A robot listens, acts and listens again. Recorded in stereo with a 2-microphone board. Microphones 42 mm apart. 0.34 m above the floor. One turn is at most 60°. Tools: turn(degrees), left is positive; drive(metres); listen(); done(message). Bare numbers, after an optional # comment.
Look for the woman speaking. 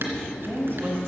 # The woman speaking: about 55° right or 125° right.
turn(-55)
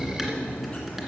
listen()
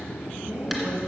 # So it is at 60° right.
turn(-60)
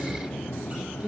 # The woman speaking is now 10° right.
turn(-10)
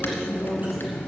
done("Facing the woman speaking, over 4 m away.")